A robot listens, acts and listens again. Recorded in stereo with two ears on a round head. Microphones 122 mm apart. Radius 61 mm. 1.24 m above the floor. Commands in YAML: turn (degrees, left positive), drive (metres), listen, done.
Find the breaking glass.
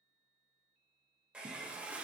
listen: true
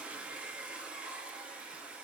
listen: true
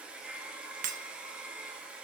turn: -65
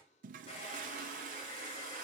listen: true
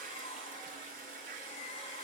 done: "I heard breaking glass, but can't make it out now. It was about straight ahead or 50° right."